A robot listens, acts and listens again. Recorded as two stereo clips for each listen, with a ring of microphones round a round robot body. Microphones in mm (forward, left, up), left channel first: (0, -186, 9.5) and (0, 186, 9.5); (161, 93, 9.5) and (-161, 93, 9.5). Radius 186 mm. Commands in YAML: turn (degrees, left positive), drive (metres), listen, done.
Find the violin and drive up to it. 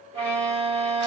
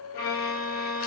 turn: 15
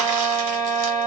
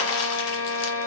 drive: 1.0
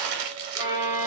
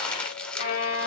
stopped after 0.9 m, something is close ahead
turn: 15
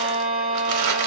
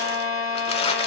done: "I am next to the violin."